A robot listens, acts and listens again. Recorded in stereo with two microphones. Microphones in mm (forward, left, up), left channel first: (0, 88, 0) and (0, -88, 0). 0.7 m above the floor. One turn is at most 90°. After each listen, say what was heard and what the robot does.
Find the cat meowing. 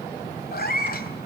The cat meowing: about 60° left or 120° left. Turn 60° left.
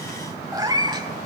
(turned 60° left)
So it is at 25° right. Turn 25° right.
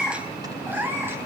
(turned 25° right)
The cat meowing is now 10° right. Turn 10° right.
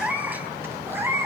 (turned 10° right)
The cat meowing is now 15° right. Turn 15° right.
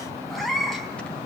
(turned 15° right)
Found it: a cat meowing, straight ahead, 2 to 4 m away.